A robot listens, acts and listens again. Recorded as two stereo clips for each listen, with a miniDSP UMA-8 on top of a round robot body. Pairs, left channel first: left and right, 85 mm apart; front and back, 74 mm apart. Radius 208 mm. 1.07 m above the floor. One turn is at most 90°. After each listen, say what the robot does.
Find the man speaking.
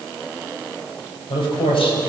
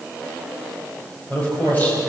Turn 70° left.
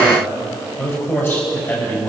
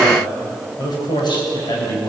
Turn 25° left.
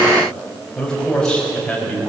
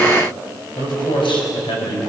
Turn 10° left.
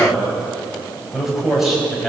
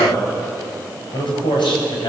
Facing the man speaking.